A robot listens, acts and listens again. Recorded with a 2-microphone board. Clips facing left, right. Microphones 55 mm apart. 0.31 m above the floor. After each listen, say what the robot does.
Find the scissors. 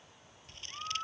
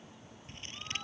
Turn 30° right.
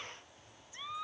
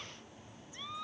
Keep listening.
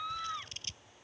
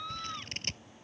Turn 125° right.
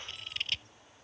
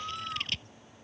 Facing the scissors.